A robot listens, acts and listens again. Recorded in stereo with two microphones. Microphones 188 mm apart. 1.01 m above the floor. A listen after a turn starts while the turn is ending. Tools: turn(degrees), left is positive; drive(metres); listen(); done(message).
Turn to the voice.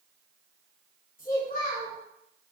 turn(degrees=45)
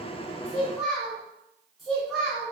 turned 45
done("Facing the child speaking.")